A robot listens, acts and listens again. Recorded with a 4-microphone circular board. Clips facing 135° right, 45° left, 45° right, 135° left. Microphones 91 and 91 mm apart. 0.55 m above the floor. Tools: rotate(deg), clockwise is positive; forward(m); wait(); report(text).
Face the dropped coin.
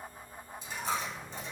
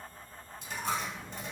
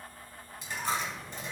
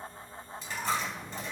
rotate(-30)
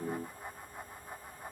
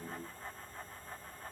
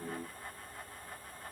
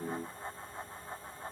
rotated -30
report("Facing where the dropped coin came from. I can't hear it now.")